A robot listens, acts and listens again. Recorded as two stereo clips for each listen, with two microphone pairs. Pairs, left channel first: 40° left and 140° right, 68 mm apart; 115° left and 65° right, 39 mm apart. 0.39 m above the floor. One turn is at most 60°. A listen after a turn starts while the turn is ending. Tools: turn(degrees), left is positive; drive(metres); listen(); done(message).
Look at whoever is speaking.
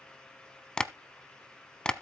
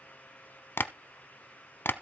listen()
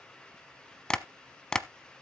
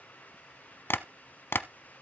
listen()
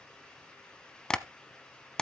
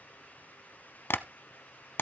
done("I can't make out anyone speaking to turn to.")